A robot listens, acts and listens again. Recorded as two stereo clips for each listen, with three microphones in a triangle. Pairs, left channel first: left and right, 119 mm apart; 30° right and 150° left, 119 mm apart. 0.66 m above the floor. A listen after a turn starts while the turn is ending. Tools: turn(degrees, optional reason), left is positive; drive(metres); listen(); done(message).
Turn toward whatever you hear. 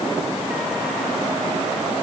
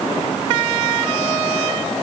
listen()
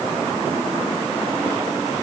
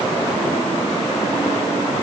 listen()
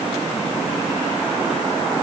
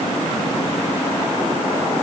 done("I can't make out anything to turn to.")